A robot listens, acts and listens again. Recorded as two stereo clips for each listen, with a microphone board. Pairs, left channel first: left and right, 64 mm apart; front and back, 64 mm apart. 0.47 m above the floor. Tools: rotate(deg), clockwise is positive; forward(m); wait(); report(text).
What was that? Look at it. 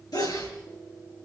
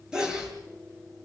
rotate(-100)
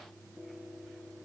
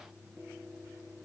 report("Facing where the sneeze came from. I can't hear it now.")